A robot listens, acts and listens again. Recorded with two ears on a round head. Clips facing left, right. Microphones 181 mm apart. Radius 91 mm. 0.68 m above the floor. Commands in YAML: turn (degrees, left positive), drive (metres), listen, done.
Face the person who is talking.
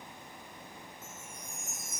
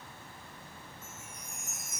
listen: true
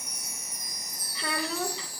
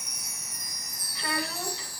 turn: 70
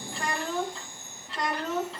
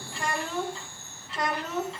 done: "Facing the child speaking, over 4 m away."